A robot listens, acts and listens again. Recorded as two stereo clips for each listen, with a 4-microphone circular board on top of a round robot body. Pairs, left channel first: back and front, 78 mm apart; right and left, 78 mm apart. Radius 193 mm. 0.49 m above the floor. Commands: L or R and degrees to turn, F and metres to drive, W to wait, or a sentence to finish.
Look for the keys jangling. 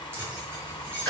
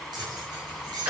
L60
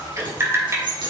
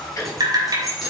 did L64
Facing the keys jangling, over 4 m away.